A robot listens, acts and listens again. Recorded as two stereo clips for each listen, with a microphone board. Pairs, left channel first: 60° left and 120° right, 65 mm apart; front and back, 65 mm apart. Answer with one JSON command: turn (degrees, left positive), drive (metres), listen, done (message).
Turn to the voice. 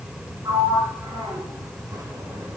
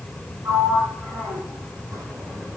{"listen": true}
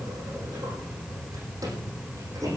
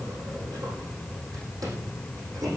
{"listen": true}
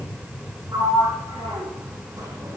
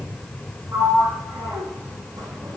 {"done": "I can't make out anyone speaking to turn to."}